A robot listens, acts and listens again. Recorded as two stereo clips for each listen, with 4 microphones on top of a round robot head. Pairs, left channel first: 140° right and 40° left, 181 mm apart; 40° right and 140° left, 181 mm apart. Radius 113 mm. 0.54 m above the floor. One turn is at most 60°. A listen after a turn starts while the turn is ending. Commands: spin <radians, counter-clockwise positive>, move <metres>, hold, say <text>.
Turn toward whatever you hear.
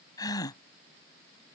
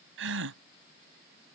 spin 1.05
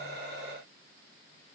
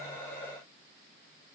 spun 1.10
spin 1.05
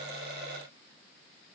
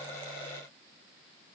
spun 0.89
spin 0.61
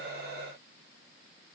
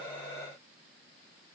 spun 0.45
spin 0.17
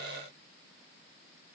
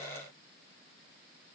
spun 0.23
say I heard a gasp from this way, but can't make it out now.